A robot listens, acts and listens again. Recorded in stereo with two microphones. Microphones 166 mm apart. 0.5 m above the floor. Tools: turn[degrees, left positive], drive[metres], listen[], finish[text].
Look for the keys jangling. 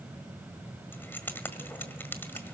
Action: turn[30]
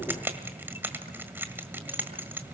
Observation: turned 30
Thought: So it is at 15° right.
Action: turn[-15]
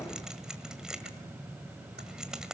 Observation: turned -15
Action: finish[Facing the keys jangling, 1 to 2 m away.]